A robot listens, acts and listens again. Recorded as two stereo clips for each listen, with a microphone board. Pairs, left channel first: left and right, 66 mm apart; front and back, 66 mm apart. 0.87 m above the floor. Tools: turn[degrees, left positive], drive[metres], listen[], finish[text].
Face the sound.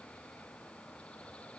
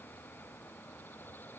Action: listen[]
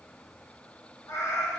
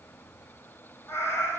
Thought: The cat meowing: 55° left.
Action: turn[55]
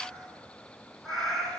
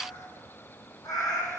Action: finish[Facing the cat meowing, 2 to 4 m away.]